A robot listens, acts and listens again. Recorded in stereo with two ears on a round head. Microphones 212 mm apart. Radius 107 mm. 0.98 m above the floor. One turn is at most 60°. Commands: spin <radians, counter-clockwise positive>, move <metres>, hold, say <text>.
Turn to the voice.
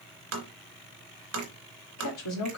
spin 1.05
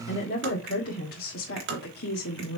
spin 0.79
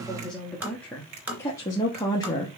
spin 0.26
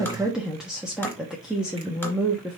say Facing the woman speaking, 1 to 2 m away.